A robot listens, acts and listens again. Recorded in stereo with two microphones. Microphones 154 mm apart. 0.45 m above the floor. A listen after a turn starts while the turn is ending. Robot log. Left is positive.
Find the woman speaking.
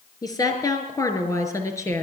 note: The woman speaking: about 20° left or 160° left.
cmd yaw +20
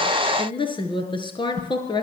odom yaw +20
note: The woman speaking: about 30° left or 150° left.
cmd yaw +30
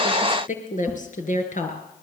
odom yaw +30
note: So it is at 125° left.
cmd yaw +125
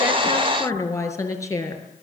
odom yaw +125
note: The woman speaking is now 20° left.
cmd yaw +20
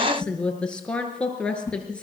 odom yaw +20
note: The woman speaking is now 10° left.
cmd yaw +10
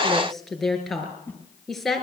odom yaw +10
end: Facing the woman speaking, over 4 m away.